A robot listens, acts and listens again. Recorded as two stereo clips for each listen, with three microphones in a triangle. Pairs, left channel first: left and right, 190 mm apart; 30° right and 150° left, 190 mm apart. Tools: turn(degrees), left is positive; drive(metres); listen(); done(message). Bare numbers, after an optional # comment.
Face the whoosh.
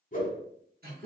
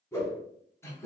# The whoosh: 45° left.
turn(45)
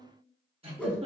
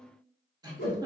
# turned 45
done("Found it: a whoosh, straight ahead, under 1 m away.")